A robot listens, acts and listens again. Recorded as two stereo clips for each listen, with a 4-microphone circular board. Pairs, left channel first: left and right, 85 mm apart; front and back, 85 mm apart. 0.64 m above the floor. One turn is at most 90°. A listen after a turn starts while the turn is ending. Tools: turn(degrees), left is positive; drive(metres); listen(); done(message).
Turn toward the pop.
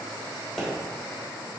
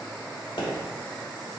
done("Found it: a pop, straight ahead.")